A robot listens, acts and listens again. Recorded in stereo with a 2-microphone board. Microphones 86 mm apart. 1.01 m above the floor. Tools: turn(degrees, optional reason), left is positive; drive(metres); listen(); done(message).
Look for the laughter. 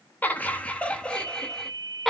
turn(degrees=30)
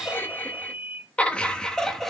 turn(degrees=30)
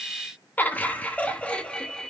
turn(degrees=30)
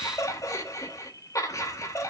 turn(degrees=140, reason="So it is at 140° left.")
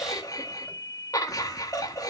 turn(degrees=45, reason="The laughter is now 45° left.")
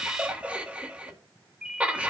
turn(degrees=-15, reason="The laughter is now 15° right.")
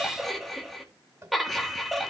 done("Found it: laughter, straight ahead, 1 to 2 m away.")